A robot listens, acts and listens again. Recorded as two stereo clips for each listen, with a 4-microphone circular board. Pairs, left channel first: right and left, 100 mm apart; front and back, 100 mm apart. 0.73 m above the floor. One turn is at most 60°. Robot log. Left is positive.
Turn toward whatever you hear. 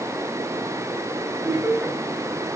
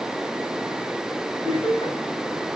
note: The laughter: 20° left.
cmd yaw +20
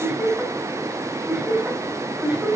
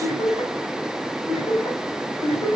end: Found it: laughter, straight ahead.